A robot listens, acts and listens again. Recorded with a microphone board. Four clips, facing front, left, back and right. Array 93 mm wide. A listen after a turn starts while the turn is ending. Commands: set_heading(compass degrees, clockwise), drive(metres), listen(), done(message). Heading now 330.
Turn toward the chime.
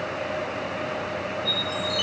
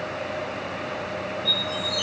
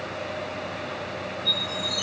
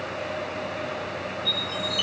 set_heading(20)
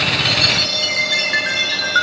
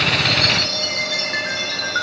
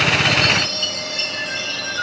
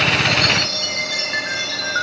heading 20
done("Facing the chime.")